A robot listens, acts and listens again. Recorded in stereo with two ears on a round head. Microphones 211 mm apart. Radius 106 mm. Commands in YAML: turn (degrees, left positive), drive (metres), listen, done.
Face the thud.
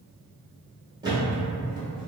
turn: -20
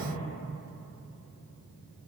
listen: true
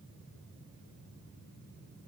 done: "I heard a thud, but can't make it out now. It was about straight ahead or 140° right."